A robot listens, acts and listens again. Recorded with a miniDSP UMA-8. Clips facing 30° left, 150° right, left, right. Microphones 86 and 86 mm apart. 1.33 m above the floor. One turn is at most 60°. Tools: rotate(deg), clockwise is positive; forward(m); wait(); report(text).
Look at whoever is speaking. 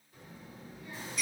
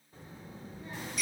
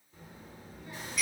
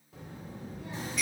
rotate(60)
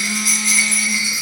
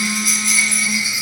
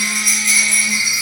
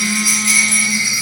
rotate(30)
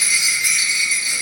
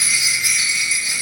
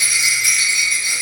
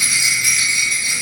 wait()
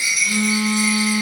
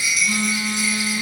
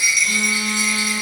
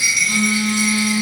report("Facing where the child speaking came from. I can't hear it now.")